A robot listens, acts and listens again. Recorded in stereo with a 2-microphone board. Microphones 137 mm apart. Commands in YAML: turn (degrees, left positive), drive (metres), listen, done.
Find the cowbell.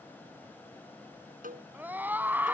turn: -90
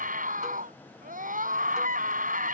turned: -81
turn: -10
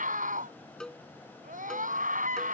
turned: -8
done: "Facing the cowbell."